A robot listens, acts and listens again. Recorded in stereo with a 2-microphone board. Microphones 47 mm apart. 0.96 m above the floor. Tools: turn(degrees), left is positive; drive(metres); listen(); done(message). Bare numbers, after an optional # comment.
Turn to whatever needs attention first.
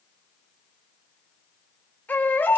# The baby crying: about 40° left or 140° left.
turn(40)
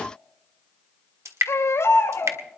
# So it is at 100° left.
turn(100)
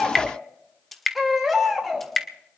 done("Found it: a baby crying, straight ahead.")